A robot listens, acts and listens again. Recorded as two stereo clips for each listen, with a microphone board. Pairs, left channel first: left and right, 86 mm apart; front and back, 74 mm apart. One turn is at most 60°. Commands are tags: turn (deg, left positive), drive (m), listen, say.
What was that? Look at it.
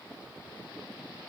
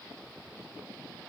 <listen/>
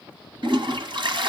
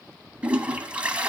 <turn deg="-60"/>
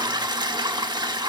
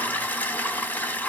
<turn deg="-60"/>
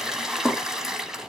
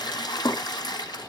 <say>Facing the toilet flushing, 1 to 2 m away.</say>